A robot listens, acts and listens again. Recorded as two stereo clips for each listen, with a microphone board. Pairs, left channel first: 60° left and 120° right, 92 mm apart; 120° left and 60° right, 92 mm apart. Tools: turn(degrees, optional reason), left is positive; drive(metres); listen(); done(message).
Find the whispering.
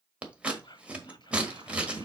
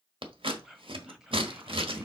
turn(degrees=25, reason="The whispering: 25° left.")
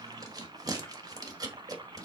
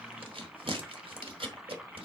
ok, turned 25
listen()
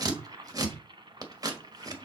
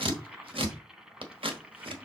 listen()
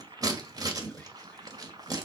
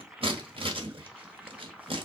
done("Facing where the whispering came from. I can't hear it now.")